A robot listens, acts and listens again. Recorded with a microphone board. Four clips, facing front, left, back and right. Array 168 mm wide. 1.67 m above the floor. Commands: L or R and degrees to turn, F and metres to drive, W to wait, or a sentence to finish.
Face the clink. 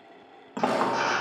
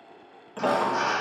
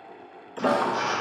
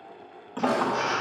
R10
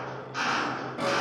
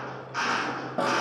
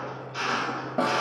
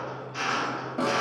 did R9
W
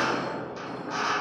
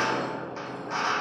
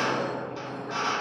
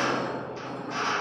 Found it: a clink, straight ahead.